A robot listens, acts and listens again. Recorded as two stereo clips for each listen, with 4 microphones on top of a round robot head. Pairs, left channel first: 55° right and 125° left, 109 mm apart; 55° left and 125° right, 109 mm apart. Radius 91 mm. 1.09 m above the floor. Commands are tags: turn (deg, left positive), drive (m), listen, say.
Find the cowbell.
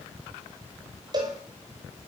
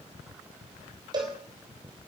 <turn deg="180"/>
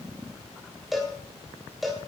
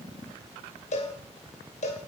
<turn deg="40"/>
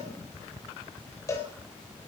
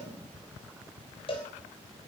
<turn deg="10"/>
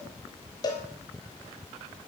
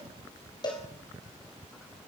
<say>Found it: a cowbell, straight ahead, 2 to 4 m away.</say>